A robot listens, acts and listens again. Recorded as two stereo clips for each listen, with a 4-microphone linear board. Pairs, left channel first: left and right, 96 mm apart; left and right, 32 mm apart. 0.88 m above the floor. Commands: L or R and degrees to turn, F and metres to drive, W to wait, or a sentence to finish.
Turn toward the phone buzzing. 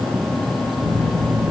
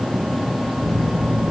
R45
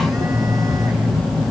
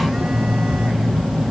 Facing the phone buzzing.